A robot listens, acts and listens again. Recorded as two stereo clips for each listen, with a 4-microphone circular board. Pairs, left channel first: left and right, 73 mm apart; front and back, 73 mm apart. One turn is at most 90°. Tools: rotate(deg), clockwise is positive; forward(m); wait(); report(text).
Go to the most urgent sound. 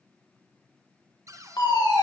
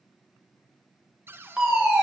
rotate(-90)
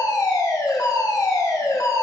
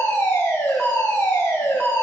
rotate(-60)
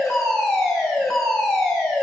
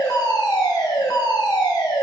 rotate(-10)
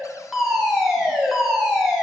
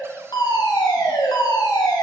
forward(1.0)
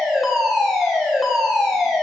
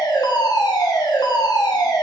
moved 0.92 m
forward(1.0)
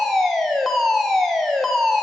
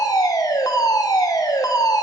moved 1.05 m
forward(1.0)
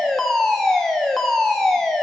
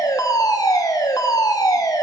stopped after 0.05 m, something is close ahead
report("I am next to the fire alarm.")